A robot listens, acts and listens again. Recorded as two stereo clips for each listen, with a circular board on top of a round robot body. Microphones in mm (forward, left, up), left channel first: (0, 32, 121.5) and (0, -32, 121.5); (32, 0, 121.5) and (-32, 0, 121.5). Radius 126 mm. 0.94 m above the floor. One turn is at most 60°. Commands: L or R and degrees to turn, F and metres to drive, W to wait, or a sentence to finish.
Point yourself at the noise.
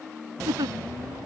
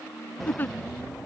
R60
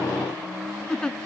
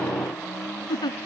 L10
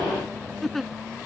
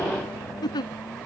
Found it: a giggle, straight ahead.